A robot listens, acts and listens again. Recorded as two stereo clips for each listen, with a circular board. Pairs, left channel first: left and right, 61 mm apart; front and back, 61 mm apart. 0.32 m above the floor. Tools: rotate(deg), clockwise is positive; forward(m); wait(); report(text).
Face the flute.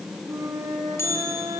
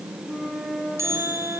rotate(105)
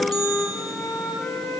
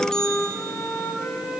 rotate(-40)
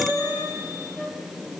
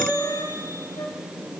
rotate(10)
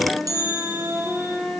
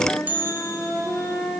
report("Found it: a flute, straight ahead, over 4 m away.")